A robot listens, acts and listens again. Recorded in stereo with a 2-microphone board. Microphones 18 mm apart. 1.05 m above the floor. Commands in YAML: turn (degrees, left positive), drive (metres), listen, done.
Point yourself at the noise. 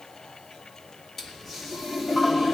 turn: 20
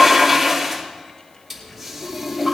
done: "Facing the toilet flushing."